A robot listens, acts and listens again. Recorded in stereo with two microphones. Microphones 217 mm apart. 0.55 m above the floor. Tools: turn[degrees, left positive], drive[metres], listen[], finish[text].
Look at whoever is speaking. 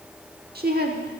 Thought: The woman speaking: about 45° right or 135° right.
Action: turn[-45]
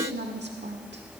Thought: So it is at 75° right.
Action: turn[-75]
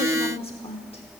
Thought: The woman speaking is now 30° left.
Action: turn[30]
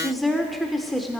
Action: finish[Found it: a woman speaking, straight ahead, 1 to 2 m away.]